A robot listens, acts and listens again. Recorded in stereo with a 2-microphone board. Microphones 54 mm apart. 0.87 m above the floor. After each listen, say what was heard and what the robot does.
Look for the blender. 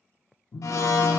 Turn 90° left.
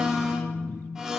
So it is at 10° right. Turn 10° right.
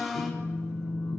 Facing the blender, 1 to 2 m away.